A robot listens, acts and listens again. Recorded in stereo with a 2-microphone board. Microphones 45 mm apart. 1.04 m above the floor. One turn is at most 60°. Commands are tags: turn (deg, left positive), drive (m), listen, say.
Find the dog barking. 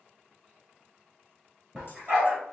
<turn deg="-15"/>
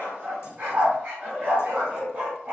<turn deg="-40"/>
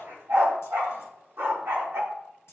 <turn deg="-60"/>
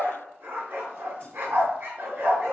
<turn deg="-55"/>
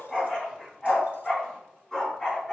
<turn deg="10"/>
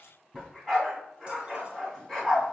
<say>Facing the dog barking, 2 to 4 m away.</say>